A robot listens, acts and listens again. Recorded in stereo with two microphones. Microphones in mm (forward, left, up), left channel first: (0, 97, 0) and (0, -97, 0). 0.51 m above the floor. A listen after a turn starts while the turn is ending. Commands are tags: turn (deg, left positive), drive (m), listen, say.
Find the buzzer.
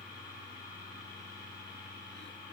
<listen/>
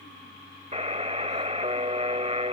<turn deg="-35"/>
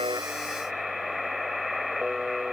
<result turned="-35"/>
<say>Facing the buzzer.</say>